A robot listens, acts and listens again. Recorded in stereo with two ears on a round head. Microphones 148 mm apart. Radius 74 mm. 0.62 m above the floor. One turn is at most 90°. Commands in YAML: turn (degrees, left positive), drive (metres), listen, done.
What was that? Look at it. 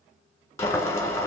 turn: 15
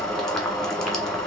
done: "Facing the boiling, 1 to 2 m away."